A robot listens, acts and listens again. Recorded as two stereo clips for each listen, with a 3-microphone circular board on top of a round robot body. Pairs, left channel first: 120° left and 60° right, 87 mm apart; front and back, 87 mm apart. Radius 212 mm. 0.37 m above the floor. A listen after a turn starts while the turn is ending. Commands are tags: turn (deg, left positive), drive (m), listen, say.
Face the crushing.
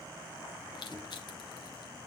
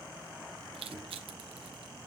<turn deg="160"/>
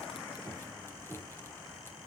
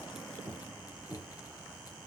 <listen/>
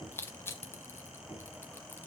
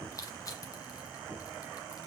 <turn deg="50"/>
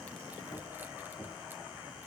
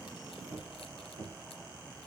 <listen/>
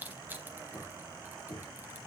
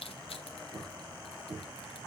<turn deg="10"/>
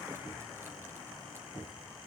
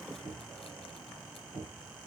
<listen/>
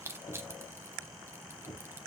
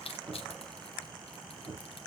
<say>Found it: crushing, straight ahead.</say>